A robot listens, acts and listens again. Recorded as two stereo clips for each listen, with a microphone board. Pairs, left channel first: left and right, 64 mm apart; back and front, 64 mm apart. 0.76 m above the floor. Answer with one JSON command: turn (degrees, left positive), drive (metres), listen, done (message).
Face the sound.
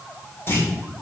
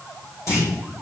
{"turn": 140}
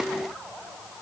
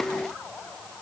{"done": "Facing where the clunk came from. I can't hear it now."}